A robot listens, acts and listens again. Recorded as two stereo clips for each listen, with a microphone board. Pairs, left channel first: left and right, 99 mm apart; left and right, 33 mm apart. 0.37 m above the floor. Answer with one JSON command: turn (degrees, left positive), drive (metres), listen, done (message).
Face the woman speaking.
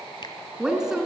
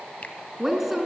{"turn": -30}
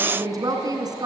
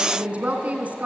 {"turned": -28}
{"turn": -140}
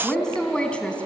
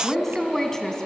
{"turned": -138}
{"turn": 10}
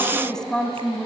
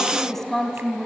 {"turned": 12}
{"turn": 10}
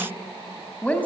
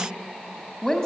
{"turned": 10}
{"turn": 15}
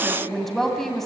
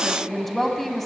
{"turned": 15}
{"done": "Facing the woman speaking."}